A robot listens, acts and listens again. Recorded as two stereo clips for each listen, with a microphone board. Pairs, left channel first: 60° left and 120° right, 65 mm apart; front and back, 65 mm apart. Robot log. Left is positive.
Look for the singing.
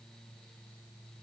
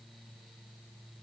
cmd idle
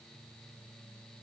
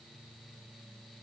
cmd idle
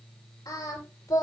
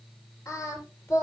note: The singing: 45° left.
cmd yaw +45
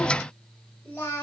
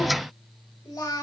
end: Facing the singing.